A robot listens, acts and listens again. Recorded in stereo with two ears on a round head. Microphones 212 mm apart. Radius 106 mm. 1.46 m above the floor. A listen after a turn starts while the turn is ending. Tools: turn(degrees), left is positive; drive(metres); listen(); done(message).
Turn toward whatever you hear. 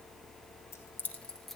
turn(degrees=30)
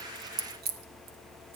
turn(degrees=-45)
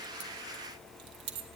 turn(degrees=-50)
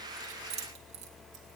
turn(degrees=-25)
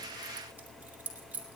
done("Found it: keys jangling, straight ahead, 2 to 4 m away.")